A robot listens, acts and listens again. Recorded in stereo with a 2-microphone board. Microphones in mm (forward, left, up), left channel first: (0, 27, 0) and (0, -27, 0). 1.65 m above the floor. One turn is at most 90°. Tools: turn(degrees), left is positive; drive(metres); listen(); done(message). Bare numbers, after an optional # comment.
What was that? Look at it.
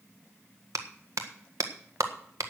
turn(-90)
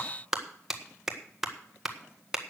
# So it is at 10° right.
turn(-10)
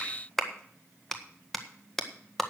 done("Facing the clap, 1 to 2 m away.")